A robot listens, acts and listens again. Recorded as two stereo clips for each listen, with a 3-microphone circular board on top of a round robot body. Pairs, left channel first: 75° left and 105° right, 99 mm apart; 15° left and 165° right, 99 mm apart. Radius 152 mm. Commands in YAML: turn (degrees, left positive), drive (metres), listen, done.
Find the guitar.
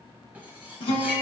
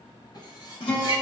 turn: 55
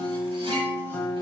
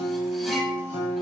turn: 10
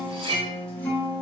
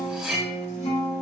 done: "Found it: a guitar, straight ahead."